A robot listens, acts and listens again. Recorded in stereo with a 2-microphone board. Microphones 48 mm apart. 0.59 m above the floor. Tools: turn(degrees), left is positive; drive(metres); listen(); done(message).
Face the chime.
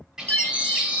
turn(degrees=40)
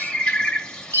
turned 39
turn(degrees=100)
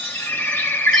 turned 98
listen()
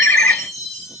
done("Found it: a chime, straight ahead, 1 to 2 m away.")